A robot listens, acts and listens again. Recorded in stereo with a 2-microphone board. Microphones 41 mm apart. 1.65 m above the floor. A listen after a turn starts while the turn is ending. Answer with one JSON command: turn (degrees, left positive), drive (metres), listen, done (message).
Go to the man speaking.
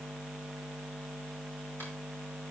{"listen": true}
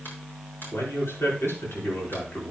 {"turn": 90}
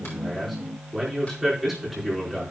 {"drive": 1.0}
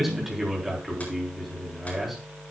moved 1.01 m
{"drive": 1.0}
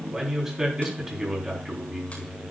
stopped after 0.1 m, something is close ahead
{"turn": -10}
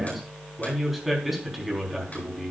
{"done": "Something is in my way. I am facing the man speaking but have not reached it."}